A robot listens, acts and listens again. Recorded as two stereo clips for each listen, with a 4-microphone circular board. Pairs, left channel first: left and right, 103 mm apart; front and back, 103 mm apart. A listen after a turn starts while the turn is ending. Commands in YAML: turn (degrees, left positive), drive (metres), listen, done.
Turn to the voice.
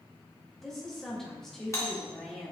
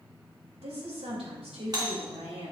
turn: 175
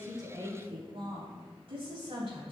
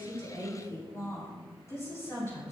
turn: -60
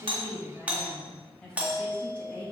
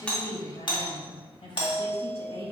turn: 10
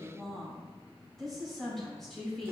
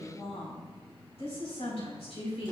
done: "Found it: a woman speaking, straight ahead, over 4 m away."